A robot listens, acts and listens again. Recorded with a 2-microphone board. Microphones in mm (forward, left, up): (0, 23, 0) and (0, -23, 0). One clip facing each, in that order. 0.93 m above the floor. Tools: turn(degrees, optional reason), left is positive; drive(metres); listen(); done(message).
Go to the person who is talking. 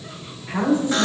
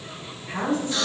turn(degrees=30)
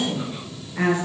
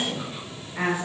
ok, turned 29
turn(degrees=-15, reason="So it is at 15° right.")
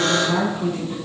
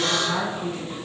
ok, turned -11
drive(metres=1.0)
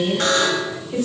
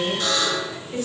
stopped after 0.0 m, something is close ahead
done("Something is in my way. I am facing the woman speaking but have not reached it.")